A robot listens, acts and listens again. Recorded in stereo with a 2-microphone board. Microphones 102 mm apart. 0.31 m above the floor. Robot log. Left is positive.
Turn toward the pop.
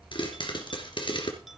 note: The pop: about 55° left or 125° left.
cmd yaw +55
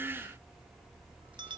cmd idle
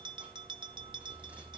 end: I heard a pop, but can't make it out now. It was about straight ahead or 70° left.